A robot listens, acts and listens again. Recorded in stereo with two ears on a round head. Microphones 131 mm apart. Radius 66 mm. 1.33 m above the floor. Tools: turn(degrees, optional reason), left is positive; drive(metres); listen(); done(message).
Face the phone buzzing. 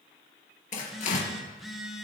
turn(degrees=30)
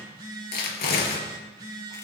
turn(degrees=-30, reason="So it is at 30° right.")
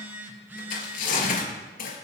turn(degrees=-15, reason="The phone buzzing is now 15° right.")
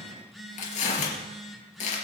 done("Facing the phone buzzing, 2 to 4 m away.")